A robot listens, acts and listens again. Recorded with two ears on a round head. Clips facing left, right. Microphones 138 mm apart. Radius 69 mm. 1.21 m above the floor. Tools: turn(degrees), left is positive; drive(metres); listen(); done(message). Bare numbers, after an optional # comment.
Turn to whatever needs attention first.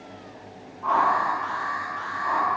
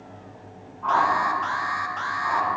# The alarm: about 70° right or 110° right.
turn(-70)
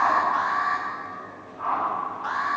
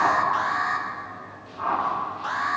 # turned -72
# So it is at 30° right.
turn(-30)
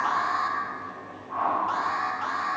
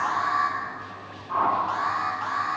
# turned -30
done("Facing the alarm, 1 to 2 m away.")